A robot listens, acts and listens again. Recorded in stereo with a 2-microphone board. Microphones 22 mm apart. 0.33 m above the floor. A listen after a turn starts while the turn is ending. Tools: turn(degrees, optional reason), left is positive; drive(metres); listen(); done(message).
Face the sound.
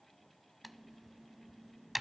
turn(degrees=-30)
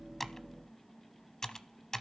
turn(degrees=20, reason="So it is at 20° left.")
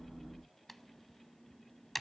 done("Found it: typing on a keyboard, straight ahead, under 1 m away.")